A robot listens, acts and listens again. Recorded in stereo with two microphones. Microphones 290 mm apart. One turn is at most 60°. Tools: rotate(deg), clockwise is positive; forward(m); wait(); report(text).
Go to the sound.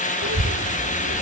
rotate(60)
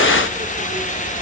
rotate(20)
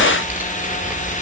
forward(1.0)
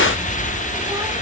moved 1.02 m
rotate(10)
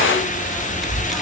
forward(1.0)
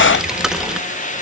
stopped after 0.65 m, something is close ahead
report("I am next to the child speaking.")